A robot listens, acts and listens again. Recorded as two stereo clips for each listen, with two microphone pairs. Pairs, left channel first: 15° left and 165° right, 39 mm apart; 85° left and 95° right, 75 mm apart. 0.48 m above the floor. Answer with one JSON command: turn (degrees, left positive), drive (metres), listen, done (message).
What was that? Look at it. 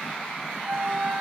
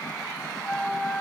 {"turn": 165}
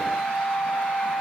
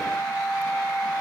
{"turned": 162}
{"done": "Found it: a flute, straight ahead."}